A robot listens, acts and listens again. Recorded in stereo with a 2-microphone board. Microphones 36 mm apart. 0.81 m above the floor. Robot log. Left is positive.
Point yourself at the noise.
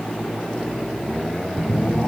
note: The phone buzzing: about 15° right or 165° right.
cmd yaw -15
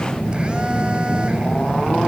note: So it is at 150° right.
cmd yaw -150
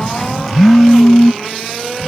note: The phone buzzing is now 10° left.
cmd yaw +10
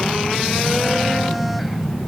end: Facing the phone buzzing.